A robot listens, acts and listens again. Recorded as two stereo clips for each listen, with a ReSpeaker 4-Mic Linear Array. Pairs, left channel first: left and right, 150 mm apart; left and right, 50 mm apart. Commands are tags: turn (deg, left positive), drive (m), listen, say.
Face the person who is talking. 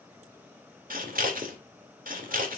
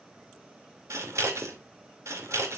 <listen/>
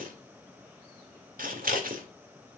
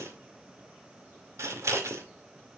<listen/>
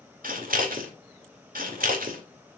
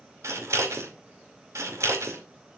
<say>I can't make out anyone speaking, only scissors.</say>